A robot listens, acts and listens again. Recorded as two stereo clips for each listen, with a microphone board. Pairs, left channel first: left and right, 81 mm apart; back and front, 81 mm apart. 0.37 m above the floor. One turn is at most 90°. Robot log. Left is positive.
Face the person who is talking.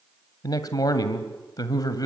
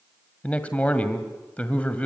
note: The man speaking: 110° left.
cmd yaw +90
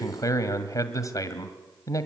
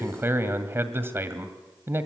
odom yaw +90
note: The man speaking is now 55° left.
cmd yaw +55
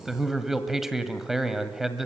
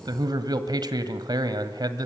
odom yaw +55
end: Found it: a man speaking, straight ahead, 1 to 2 m away.